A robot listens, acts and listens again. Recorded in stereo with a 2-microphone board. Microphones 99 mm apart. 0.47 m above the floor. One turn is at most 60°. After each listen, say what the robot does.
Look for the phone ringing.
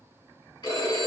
Turn 55° left.
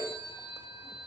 Turn 60° left.
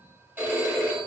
Turn 15° right.
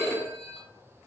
Found it: a phone ringing, straight ahead.